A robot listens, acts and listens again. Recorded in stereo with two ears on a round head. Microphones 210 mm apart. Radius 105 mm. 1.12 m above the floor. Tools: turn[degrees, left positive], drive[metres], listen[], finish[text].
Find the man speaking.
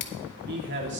Thought: The man speaking: about 50° right or 130° right.
Action: turn[-50]
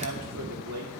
Thought: So it is at 70° right.
Action: turn[-70]
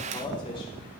Thought: The man speaking is now 20° left.
Action: turn[20]
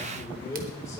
Thought: The man speaking is now 15° left.
Action: turn[15]
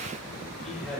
Action: finish[Facing the man speaking, over 4 m away.]